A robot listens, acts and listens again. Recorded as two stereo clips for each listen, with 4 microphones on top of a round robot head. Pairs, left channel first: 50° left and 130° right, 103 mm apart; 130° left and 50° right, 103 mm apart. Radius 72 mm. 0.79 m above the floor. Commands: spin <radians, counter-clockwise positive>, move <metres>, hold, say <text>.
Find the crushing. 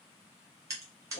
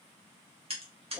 spin -1.22
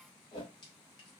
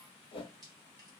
hold
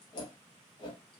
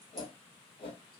hold
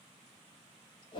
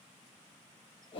say Facing where the crushing came from. I can't hear it now.